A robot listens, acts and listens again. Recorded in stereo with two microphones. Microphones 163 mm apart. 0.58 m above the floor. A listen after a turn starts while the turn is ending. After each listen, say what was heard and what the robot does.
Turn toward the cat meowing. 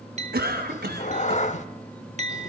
The cat meowing: about 45° left or 135° left. Turn 45° left.
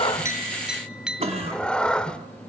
Facing the cat meowing, 1 to 2 m away.